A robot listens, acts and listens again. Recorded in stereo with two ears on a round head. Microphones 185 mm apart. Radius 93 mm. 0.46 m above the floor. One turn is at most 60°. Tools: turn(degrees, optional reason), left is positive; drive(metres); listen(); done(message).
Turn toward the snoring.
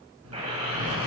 turn(degrees=-60, reason="The snoring: about 70° right or 110° right.")
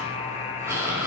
turn(degrees=-15, reason="So it is at 15° right.")
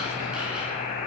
done("Found it: snoring, straight ahead, over 4 m away.")